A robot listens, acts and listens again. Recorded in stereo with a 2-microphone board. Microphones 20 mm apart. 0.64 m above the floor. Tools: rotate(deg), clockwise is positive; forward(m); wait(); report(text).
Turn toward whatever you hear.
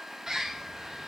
rotate(25)
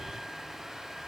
wait()
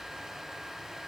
wait()
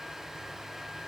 report("I heard a bird, but can't make it out now. It was about straight ahead or 130° right.")